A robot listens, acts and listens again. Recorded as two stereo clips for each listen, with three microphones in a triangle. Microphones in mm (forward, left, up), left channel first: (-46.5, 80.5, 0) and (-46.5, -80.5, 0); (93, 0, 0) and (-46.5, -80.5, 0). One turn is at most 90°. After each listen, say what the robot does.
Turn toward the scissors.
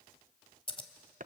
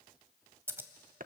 Turn 90° left.
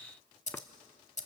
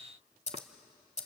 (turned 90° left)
Turn 65° left.
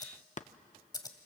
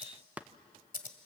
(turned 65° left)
Turn 30° left.
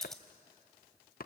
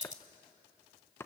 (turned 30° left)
Facing the scissors.